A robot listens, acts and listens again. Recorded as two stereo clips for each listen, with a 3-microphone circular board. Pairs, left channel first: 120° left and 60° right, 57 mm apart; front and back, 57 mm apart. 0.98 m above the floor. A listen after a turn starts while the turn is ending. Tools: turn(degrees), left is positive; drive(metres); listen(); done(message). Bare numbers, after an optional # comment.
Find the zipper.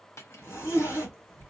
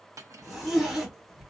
# The zipper: 95° left.
turn(95)
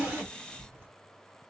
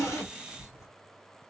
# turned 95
# The zipper is now 15° right.
turn(-15)
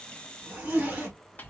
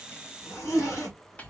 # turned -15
done("Found it: a zipper, straight ahead.")